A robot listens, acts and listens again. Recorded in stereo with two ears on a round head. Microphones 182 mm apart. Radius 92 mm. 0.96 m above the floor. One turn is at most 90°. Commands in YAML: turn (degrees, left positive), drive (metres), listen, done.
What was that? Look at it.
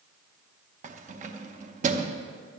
turn: -40
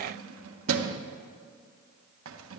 turn: -90
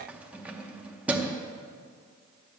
done: "Found it: keys jangling, straight ahead."